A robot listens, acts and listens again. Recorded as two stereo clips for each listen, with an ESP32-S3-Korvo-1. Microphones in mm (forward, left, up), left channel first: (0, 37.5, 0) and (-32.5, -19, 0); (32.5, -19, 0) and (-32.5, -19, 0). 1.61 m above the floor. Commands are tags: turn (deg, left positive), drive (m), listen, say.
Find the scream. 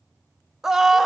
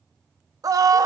<turn deg="155"/>
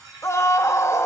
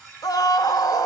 <turn deg="15"/>
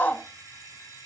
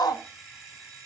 <say>Facing the scream.</say>